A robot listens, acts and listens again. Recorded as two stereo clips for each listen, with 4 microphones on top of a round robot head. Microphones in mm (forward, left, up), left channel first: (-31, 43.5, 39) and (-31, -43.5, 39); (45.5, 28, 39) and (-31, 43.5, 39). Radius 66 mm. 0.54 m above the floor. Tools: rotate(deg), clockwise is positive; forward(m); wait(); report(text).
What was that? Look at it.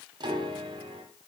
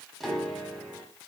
rotate(100)
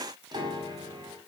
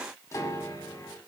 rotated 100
rotate(60)
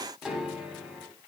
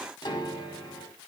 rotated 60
rotate(10)
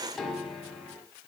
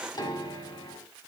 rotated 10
report("Found it: a piano, straight ahead, 2 to 4 m away.")